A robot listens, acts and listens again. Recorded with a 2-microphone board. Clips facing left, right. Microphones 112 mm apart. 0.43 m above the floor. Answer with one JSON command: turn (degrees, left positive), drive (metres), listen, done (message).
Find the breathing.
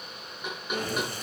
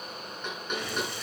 {"turn": 45}
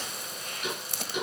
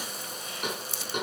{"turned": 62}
{"turn": 70}
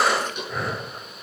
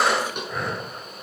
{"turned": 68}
{"done": "Found it: breathing, straight ahead, 1 to 2 m away."}